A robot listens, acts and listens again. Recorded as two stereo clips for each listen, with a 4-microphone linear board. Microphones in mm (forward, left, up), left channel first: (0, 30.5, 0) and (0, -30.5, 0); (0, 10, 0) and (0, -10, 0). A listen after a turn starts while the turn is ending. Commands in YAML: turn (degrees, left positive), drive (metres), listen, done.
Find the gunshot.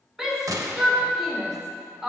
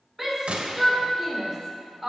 turn: -90
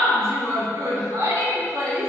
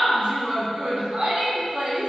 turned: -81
turn: -10
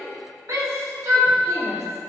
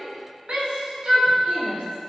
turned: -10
done: "I heard a gunshot from this way, but can't make it out now."